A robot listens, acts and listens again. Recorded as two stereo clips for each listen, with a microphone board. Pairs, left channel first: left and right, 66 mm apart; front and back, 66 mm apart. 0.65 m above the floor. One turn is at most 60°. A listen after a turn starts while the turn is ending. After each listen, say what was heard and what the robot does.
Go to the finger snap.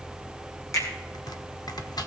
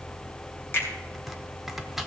The finger snap: 55° left. Turn 55° left.
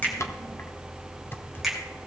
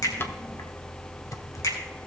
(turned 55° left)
Drive 1.0 m forward.
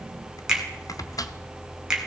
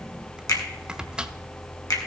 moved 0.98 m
The finger snap is now 10° right. Turn 10° right.
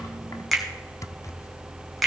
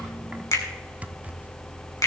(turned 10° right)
Drive 1.0 m forward.
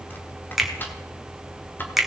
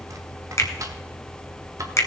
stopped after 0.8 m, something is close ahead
I am next to the finger snap.